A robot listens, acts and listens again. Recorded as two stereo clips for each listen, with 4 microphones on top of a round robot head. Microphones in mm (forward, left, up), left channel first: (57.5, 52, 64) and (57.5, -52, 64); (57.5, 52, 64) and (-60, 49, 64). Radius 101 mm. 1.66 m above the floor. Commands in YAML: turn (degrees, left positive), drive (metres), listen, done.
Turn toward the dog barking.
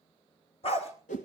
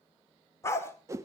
turn: 70
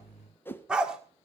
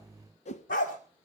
turn: -10
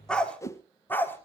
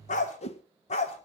turn: 20
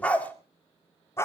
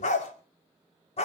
turn: 30
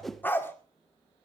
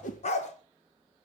turn: 20
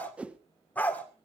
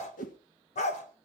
turn: 15
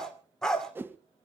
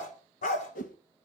done: "Facing the dog barking."